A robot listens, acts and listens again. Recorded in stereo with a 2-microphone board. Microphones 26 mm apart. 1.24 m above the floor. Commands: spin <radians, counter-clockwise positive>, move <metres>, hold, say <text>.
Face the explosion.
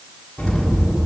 spin 0.70
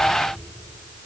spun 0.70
hold
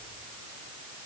say I heard an explosion, but can't make it out now. It was about straight ahead or 100° left.